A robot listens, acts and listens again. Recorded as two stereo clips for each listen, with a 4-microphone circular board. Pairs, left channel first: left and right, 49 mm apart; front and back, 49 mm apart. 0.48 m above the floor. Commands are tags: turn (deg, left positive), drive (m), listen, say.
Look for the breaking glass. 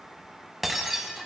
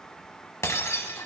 <say>Found it: breaking glass, straight ahead.</say>